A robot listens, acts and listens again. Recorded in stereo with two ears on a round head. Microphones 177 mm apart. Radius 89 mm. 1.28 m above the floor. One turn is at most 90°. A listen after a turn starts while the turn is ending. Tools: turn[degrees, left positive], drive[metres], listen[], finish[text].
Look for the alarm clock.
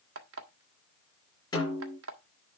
Thought: The alarm clock: about 70° right or 110° right.
Action: turn[-70]
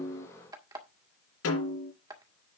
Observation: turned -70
Thought: So it is at 20° right.
Action: turn[-20]
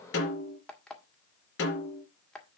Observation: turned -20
Action: finish[Facing the alarm clock.]